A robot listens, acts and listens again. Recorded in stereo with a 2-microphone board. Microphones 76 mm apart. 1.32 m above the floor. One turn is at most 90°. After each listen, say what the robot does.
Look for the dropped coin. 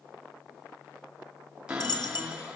Turn 70° left.
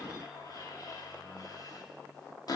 Keep listening.
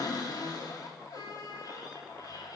I heard a dropped coin, but can't make it out now. It was about straight ahead or 40° left.